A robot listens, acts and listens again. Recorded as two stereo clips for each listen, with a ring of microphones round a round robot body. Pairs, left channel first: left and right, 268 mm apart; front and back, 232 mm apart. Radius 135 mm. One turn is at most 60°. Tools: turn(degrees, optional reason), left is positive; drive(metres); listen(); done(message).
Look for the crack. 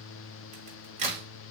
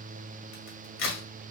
turn(degrees=-30, reason="The crack: 30° right.")
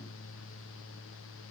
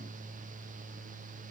done("I heard a crack from this way, but can't make it out now.")